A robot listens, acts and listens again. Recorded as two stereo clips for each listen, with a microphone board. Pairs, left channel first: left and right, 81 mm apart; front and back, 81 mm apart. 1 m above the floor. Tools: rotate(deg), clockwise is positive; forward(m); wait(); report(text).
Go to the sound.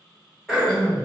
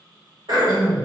rotate(-175)
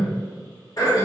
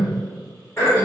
rotate(-55)
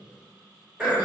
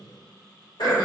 rotate(15)
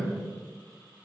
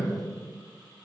forward(1.0)
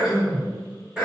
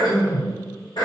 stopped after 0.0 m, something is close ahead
rotate(10)
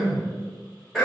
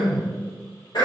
report("Something is in my way. I am facing the throat clearing but have not reached it.")